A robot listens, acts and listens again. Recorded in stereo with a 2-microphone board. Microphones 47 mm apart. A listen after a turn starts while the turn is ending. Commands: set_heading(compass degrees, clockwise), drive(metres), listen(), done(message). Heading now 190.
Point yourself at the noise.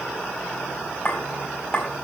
set_heading(170)
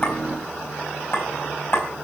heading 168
set_heading(28)
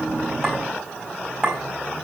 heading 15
set_heading(30)
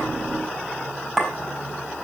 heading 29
done("Facing the clink, over 4 m away.")